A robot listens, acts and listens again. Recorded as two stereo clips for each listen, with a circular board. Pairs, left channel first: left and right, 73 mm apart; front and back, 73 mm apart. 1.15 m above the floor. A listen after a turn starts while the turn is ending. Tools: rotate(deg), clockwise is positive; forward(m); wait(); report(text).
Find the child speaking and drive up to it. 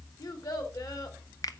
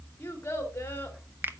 rotate(-60)
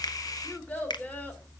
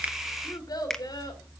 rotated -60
rotate(-25)
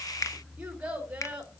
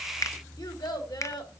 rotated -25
rotate(15)
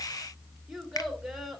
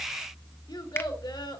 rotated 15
forward(1.0)
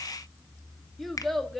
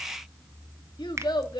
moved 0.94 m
forward(1.0)
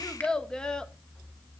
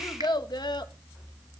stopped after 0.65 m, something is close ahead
rotate(-10)
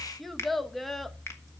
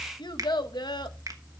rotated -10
report("I am next to the child speaking.")